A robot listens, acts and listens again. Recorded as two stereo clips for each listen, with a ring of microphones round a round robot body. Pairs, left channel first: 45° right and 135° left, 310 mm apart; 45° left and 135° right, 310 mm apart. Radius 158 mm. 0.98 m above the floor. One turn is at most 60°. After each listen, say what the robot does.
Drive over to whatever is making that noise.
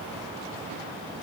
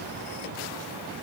Keep listening.
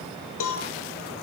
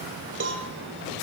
Turn 60° right.
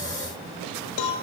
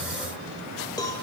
Turn 35° right.
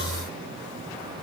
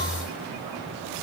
Keep listening.
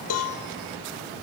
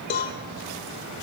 Turn 15° right.
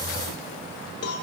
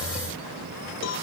Drive 1.0 m forward.
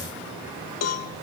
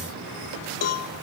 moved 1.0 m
Drive 1.0 m forward.
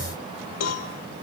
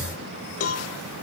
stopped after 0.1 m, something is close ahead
I am next to the cowbell.